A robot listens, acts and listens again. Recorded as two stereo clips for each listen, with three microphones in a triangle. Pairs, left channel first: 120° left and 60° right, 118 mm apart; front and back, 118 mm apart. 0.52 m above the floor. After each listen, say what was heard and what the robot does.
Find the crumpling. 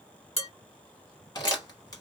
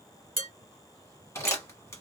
The crumpling: 65° left. Turn 65° left.
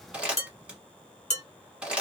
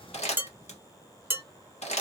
The crumpling is now 20° left. Turn 20° left.
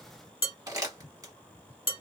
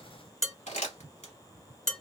Facing the crumpling.